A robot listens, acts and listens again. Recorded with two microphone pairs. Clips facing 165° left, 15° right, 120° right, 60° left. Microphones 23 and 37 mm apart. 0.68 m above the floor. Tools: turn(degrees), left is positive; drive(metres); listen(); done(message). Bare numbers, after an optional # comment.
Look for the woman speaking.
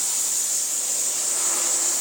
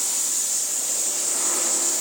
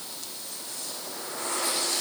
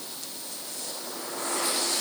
listen()
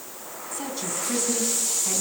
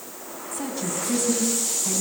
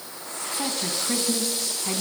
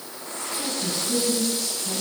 # The woman speaking: 115° right.
turn(-115)
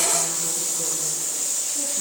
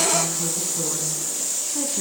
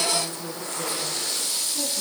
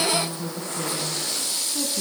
done("Facing the woman speaking, over 4 m away.")